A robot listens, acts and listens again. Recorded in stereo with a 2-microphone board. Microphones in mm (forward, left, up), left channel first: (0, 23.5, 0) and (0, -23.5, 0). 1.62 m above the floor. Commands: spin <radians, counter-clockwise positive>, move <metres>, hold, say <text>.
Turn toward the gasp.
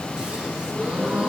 spin -0.35
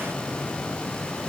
hold
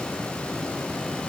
say I heard a gasp, but can't make it out now. It was about straight ahead or 140° right.